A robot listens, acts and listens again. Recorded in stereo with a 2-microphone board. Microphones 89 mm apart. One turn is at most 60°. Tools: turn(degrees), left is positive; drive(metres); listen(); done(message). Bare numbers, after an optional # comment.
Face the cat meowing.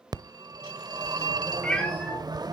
turn(30)
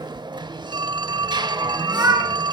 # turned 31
# So it is at 35° right.
turn(-35)
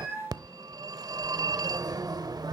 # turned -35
# The cat meowing is now 10° right.
turn(-10)
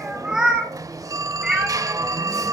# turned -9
done("Facing the cat meowing.")